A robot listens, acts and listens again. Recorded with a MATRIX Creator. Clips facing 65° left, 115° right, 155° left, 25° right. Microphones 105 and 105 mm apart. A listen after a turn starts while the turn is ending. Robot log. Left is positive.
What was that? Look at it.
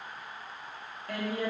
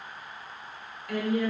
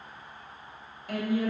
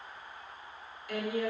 note: The woman speaking: 120° left.
cmd yaw +120
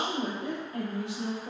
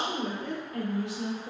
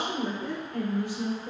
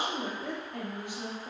note: The woman speaking is now 10° left.
cmd yaw +10
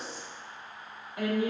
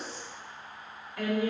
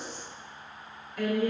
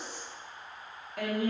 end: Facing the woman speaking, 1 to 2 m away.